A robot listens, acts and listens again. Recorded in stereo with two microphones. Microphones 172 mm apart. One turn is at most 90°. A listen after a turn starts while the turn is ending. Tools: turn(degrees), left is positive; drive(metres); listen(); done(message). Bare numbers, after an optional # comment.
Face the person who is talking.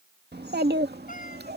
turn(-90)
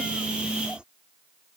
listen()
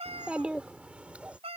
done("Found it: a child speaking, straight ahead.")